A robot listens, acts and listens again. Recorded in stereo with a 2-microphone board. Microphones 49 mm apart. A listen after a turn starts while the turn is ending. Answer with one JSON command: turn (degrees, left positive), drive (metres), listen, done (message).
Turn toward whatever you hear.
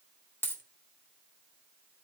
{"turn": 50}
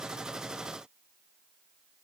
{"listen": true}
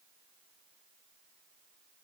{"done": "I heard a dropped coin, but can't make it out now. It was about straight ahead or 80° left."}